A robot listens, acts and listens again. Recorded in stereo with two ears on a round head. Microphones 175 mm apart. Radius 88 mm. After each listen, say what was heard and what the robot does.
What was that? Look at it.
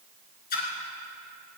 The splash: about 45° left or 135° left. Turn 45° left.
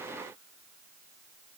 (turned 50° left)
Keep listening.
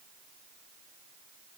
I heard a splash, but can't make it out now. It was about 5° right or 85° left.